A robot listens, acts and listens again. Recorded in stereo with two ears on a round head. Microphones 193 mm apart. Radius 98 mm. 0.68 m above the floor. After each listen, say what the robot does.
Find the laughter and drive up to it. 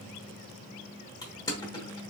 Keep listening.
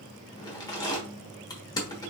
Keep listening.
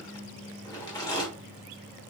I can't make out laughter, only crushing.